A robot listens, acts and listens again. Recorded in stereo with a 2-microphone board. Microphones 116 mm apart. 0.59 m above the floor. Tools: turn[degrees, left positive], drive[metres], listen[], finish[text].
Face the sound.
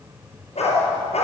Action: turn[90]
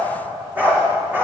Thought: So it is at 20° right.
Action: turn[-20]
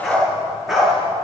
Action: finish[Found it: a dog barking, straight ahead.]